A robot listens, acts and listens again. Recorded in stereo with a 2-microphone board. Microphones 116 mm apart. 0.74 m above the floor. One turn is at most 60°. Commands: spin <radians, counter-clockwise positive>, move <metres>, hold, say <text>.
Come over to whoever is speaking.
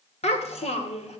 spin 1.05
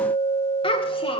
spin 0.87
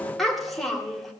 move 1.0
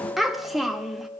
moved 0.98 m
move 1.0
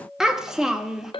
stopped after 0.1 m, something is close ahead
say I am next to the child speaking.